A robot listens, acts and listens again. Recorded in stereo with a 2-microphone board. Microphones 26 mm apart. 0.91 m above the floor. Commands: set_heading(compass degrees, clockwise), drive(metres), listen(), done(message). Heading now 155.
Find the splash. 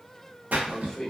set_heading(225)
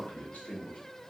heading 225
listen()
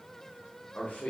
done("I heard a splash, but can't make it out now. It was about straight ahead or 40° right.")